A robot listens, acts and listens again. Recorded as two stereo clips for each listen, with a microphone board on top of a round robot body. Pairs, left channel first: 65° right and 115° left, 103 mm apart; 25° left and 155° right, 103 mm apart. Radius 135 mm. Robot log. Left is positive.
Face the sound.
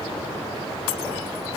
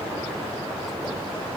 cmd idle
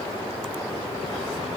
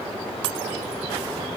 cmd idle
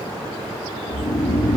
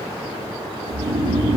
note: The snoring: 120° right.
cmd yaw -120
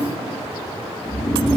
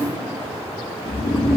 note: The snoring is now 20° left.
cmd yaw +20
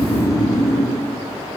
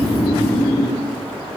end: Found it: snoring, straight ahead.